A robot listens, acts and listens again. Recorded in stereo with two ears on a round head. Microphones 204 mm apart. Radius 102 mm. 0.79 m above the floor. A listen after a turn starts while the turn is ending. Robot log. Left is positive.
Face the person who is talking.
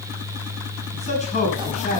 note: The man speaking: about 30° left or 150° left.
cmd yaw +30
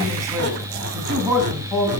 end: Facing the man speaking, over 4 m away.